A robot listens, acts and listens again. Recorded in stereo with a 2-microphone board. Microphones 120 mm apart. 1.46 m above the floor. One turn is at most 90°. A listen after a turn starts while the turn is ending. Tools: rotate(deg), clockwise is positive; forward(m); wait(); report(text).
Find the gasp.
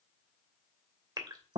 rotate(35)
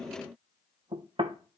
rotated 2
wait()
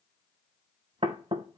report("I heard a gasp, but can't make it out now. It was about 35° right or 140° right.")